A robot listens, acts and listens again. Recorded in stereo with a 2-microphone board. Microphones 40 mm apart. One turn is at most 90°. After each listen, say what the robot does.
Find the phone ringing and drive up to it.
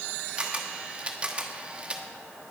Keep listening.
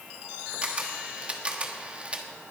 Keep listening.
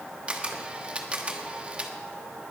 I can't make out a phone ringing, only a camera shutter.